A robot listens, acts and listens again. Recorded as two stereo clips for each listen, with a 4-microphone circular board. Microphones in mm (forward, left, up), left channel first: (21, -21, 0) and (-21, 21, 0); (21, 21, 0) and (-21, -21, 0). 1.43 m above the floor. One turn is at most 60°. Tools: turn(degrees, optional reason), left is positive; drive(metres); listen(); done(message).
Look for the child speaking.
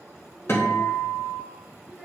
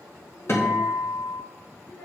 turn(degrees=50, reason="The child speaking: 50° left.")
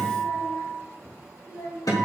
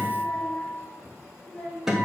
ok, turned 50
turn(degrees=-15, reason="The child speaking is now 15° right.")
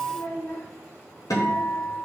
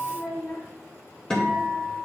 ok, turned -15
done("Facing the child speaking, over 4 m away.")